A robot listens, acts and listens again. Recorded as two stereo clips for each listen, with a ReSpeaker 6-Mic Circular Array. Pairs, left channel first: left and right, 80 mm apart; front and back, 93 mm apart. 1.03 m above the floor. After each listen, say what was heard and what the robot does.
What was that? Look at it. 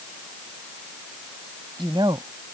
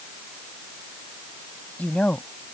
The woman speaking: 75° right. Turn 75° right.
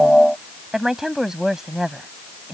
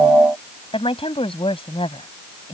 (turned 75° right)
Found it: a woman speaking, straight ahead.